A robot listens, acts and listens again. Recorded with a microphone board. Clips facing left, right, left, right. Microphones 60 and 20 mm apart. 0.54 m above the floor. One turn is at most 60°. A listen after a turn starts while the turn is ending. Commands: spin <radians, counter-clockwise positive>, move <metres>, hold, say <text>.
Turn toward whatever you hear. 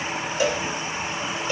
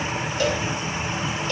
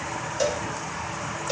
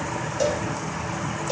spin 0.52
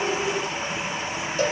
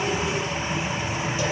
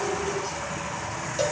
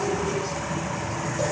hold
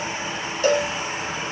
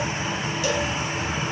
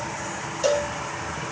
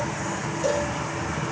spin 1.05
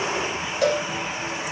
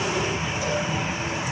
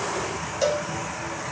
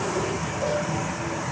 spin 1.05
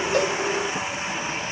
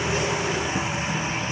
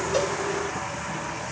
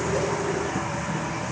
spin 0.79
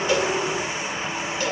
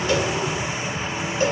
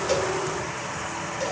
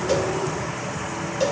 hold
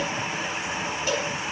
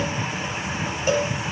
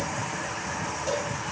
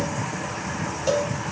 spin -0.52
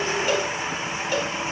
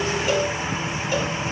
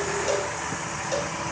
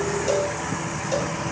hold
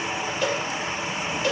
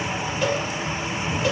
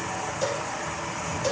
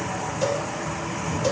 say Found it: a cowbell, straight ahead.